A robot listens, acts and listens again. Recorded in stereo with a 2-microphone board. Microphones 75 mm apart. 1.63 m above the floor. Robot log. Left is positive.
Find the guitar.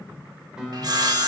cmd yaw -30
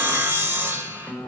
note: So it is at 25° left.
cmd yaw +25
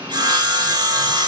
cmd idle
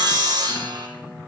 cmd idle
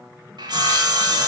end: I heard a guitar from this way, but can't make it out now.